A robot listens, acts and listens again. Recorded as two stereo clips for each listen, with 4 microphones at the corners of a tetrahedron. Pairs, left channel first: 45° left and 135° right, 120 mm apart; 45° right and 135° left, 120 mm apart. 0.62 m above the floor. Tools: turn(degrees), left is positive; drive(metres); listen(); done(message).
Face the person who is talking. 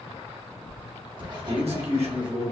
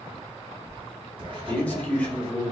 turn(degrees=-120)
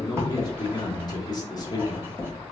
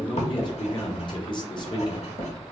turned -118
listen()
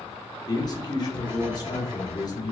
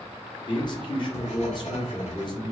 done("Facing the man speaking, 1 to 2 m away.")